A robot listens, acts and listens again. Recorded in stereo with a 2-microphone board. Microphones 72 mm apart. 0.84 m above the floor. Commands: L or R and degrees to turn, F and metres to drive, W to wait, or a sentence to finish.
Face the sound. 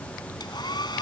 L90
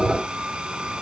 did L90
R10
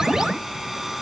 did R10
Facing the hair dryer.